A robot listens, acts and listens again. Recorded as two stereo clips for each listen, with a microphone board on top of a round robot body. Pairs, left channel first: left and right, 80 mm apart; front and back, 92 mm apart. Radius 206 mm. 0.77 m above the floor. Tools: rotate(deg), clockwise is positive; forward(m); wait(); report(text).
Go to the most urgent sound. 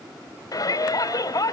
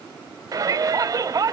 rotate(-130)
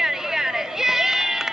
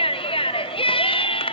forward(1.0)
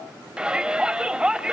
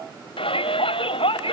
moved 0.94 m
rotate(10)
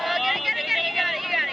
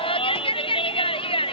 forward(1.0)
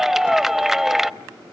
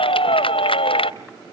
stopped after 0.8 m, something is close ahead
report("Arrived at the shout, straight ahead.")